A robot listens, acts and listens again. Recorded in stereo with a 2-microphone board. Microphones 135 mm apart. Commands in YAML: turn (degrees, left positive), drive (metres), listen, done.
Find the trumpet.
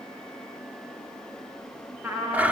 turn: -30
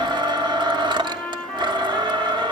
turn: 10
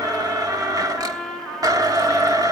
done: "Facing the trumpet, over 4 m away."